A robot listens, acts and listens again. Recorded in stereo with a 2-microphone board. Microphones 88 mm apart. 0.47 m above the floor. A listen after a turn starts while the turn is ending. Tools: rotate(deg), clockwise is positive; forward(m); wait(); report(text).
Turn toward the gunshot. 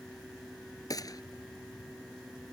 rotate(-45)
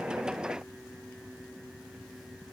wait()
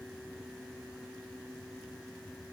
report("I heard a gunshot, but can't make it out now. It was about straight ahead or 90° left.")